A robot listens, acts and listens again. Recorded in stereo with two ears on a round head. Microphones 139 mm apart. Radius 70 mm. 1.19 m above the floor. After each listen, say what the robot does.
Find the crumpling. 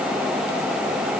Keep listening.
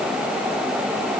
Keep listening.
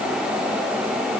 I can't make out crumpling to turn to.